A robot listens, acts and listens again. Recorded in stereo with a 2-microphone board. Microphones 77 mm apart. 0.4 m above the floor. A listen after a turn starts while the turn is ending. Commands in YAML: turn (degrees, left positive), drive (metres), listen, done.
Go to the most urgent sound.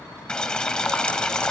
listen: true
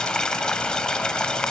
listen: true
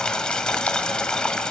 done: "I can't make out anything urgent to turn to."